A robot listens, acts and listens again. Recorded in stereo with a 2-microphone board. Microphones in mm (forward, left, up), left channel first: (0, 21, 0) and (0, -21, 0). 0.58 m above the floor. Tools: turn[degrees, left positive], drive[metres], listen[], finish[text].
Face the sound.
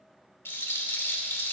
Thought: The rattle: about 75° left or 105° left.
Action: turn[75]
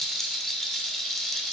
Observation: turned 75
Action: finish[Facing the rattle.]